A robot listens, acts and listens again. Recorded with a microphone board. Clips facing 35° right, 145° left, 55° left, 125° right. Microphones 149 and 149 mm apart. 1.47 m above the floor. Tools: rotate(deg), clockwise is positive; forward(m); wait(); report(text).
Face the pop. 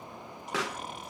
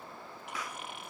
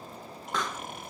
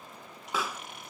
rotate(40)
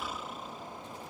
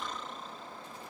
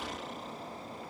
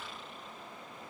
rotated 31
rotate(10)
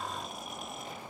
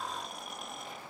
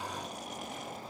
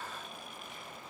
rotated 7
report("Facing where the pop came from. I can't hear it now.")